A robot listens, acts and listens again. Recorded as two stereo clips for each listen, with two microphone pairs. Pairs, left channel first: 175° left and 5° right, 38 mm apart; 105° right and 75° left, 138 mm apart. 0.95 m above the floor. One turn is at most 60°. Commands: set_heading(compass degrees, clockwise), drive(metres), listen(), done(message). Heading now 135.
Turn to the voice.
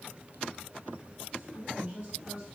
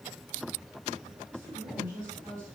set_heading(75)
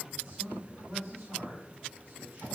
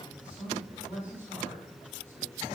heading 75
done("Facing the man speaking, over 4 m away.")